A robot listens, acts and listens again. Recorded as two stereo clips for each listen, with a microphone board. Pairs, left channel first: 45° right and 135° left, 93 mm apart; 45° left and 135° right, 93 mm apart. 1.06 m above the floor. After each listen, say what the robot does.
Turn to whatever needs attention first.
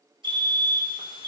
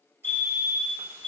Turn 120° left.
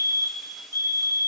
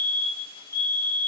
Found it: a fire alarm, straight ahead.